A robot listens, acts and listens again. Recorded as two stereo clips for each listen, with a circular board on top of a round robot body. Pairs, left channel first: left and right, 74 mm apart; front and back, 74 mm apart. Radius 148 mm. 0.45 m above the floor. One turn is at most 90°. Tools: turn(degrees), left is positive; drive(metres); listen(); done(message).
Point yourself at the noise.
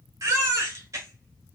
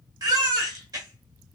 turn(degrees=-90)
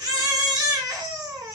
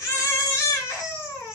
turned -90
turn(degrees=-50)
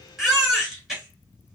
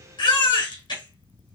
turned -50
done("Found it: a baby crying, straight ahead.")